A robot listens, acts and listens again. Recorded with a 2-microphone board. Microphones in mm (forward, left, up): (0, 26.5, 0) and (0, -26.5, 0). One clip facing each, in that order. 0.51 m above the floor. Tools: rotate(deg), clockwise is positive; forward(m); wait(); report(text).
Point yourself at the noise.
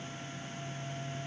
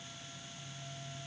wait()
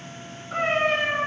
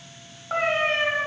rotate(70)
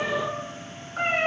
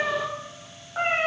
rotate(60)
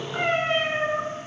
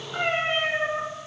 rotate(20)
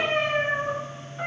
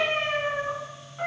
report("Found it: a cat meowing, straight ahead, 2 to 4 m away.")